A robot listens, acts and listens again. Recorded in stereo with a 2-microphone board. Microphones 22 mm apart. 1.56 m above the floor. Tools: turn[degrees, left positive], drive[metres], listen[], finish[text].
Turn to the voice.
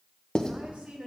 Action: turn[-90]
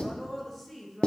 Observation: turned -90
Action: finish[Facing the woman speaking, 2 to 4 m away.]